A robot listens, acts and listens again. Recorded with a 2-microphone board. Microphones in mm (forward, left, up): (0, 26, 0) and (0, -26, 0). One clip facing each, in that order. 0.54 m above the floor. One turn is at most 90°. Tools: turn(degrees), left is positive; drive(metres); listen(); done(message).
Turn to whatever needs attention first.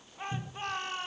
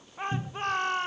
turn(degrees=-55)
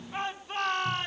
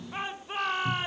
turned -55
turn(degrees=-10)
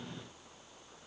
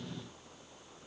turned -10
listen()
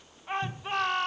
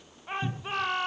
done("Found it: a shout, straight ahead.")